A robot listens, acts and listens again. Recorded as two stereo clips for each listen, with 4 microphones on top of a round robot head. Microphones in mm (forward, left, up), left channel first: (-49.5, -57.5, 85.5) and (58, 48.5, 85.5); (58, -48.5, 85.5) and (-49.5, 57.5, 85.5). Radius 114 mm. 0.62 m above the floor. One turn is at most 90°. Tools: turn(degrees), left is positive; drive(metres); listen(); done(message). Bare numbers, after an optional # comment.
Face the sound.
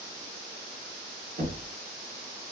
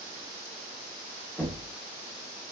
# The knocking: 35° left.
turn(35)
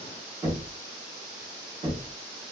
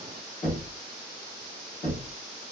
# The knocking is now 15° right.
turn(-15)
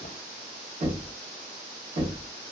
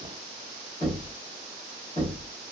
done("Facing the knocking, 1 to 2 m away.")